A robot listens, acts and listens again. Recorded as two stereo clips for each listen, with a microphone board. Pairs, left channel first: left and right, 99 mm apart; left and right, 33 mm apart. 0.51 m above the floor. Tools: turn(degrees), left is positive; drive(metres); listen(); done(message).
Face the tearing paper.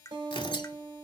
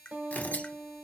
turn(degrees=55)
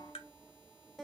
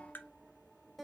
listen()
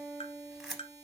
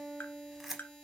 done("Facing the tearing paper.")